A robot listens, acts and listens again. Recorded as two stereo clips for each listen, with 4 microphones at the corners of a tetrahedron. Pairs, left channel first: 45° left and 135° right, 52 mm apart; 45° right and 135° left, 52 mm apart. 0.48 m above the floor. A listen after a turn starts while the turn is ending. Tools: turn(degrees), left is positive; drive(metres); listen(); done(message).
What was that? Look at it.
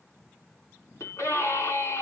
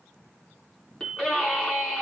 turn(degrees=30)
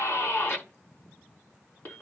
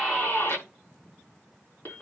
done("Found it: a scream, straight ahead.")